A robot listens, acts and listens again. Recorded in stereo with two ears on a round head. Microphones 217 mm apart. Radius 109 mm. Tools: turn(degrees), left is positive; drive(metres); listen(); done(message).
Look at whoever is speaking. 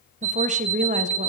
turn(degrees=-30)
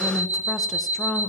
done("Found it: a woman speaking, straight ahead, under 1 m away.")